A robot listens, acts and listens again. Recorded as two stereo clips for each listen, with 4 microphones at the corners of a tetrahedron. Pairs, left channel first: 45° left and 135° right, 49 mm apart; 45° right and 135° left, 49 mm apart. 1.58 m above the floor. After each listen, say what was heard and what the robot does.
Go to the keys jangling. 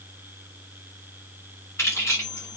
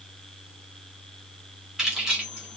The keys jangling: 60° left. Turn 60° left.
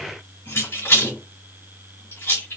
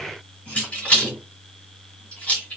The keys jangling is now 15° left. Turn 15° left.
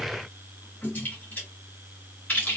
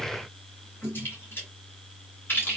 Drive 1.0 m forward.
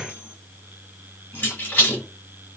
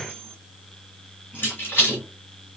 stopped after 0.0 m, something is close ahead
Blocked. The keys jangling is further on, straight ahead.